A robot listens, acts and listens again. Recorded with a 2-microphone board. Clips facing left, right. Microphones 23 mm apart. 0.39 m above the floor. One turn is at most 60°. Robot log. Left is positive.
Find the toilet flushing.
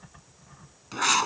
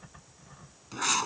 cmd idle
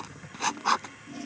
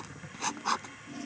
cmd yaw +30
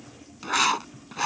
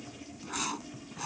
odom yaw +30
cmd idle
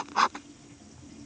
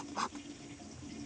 cmd idle
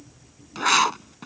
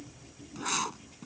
end: I heard a toilet flushing, but can't make it out now. It was about 15° right or 135° left.